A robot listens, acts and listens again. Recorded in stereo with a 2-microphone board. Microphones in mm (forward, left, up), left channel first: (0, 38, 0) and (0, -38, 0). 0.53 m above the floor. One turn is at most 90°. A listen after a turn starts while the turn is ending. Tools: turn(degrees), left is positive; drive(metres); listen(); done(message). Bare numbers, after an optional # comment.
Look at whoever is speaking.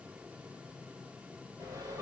listen()
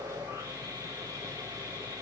listen()
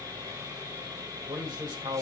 # The man speaking: about 65° right or 115° right.
turn(-65)
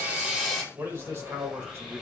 # So it is at 35° right.
turn(-35)
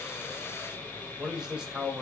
# The man speaking is now 10° right.
turn(-10)
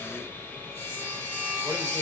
listen()
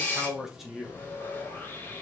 done("Facing the man speaking.")